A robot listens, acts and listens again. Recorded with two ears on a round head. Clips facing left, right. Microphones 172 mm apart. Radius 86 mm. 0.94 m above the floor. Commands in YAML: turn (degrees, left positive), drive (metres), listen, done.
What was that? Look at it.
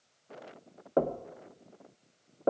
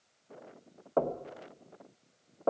turn: 20
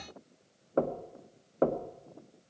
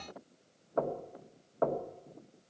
turn: 140
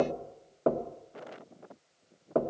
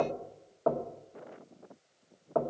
turn: 30
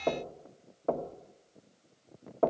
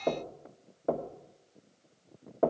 turn: -10
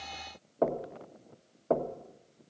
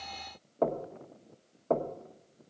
done: "Facing the knocking, 1 to 2 m away."